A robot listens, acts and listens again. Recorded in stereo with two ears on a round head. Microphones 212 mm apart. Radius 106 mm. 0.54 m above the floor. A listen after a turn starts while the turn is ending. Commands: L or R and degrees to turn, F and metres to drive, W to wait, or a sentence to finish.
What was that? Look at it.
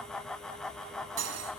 R70
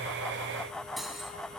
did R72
Facing the cutlery clinking.